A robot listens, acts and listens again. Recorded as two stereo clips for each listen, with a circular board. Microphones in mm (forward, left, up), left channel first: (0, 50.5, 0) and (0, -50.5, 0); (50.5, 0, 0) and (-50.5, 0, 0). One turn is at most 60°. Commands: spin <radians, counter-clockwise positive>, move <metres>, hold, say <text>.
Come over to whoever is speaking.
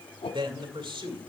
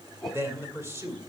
spin -1.05
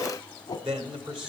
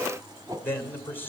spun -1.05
spin -1.05
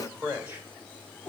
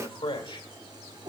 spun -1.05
spin -0.35
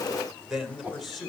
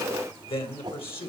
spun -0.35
move 1.0
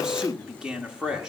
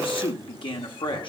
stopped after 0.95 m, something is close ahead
spin -0.17
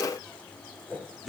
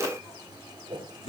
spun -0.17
say Arrived at the man speaking, straight ahead.